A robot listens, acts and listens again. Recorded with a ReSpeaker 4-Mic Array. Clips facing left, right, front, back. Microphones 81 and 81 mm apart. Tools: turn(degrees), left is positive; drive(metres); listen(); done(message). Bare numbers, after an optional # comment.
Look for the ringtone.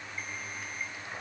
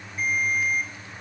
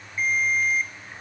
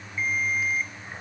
# The ringtone: 75° right.
turn(-75)
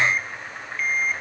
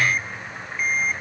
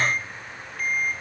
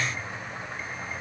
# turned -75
# The ringtone is now 15° right.
turn(-15)
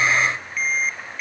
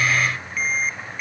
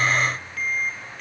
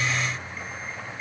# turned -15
done("Found it: a ringtone, straight ahead, 1 to 2 m away.")